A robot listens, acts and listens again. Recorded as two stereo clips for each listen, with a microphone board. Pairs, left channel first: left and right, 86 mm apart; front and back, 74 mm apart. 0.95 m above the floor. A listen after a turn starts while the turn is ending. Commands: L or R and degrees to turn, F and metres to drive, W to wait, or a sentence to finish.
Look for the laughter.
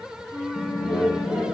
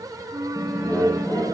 L20
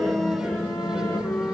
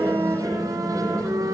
W
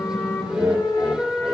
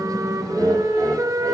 Found it: laughter, straight ahead.